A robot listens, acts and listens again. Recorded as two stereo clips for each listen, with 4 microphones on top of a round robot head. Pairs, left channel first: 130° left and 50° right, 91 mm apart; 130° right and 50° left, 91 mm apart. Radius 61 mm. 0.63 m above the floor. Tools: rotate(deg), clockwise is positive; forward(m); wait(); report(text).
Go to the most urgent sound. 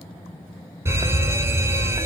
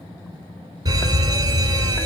forward(1.0)
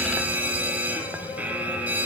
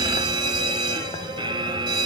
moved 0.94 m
rotate(-15)
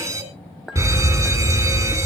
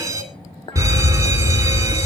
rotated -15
forward(1.0)
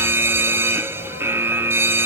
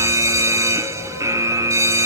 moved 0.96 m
forward(1.0)
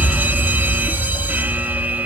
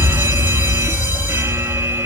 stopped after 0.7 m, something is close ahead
report("Arrived at the fire alarm, straight ahead.")